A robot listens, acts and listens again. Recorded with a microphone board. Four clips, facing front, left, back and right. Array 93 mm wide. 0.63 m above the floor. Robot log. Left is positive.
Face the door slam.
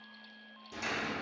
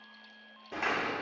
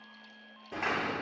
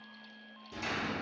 note: The door slam: 130° left.
cmd yaw +130
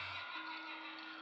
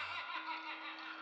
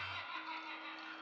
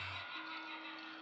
end: I heard a door slam from this way, but can't make it out now.